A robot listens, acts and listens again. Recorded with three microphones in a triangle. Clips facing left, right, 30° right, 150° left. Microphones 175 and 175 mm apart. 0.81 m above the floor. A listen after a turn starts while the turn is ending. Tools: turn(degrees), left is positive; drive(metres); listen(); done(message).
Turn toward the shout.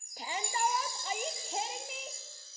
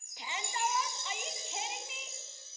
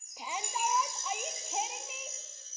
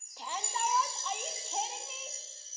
turn(degrees=50)
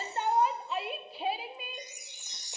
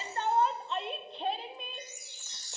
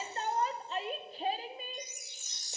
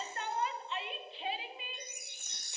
done("Found it: a shout, straight ahead.")